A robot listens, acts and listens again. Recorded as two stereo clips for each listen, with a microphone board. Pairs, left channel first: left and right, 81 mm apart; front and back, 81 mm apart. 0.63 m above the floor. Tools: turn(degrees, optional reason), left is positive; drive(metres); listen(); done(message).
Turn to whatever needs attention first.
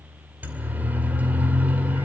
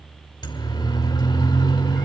turn(degrees=-20, reason="The siren: 20° right.")
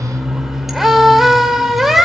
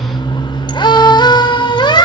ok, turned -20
done("Facing the siren, 2 to 4 m away.")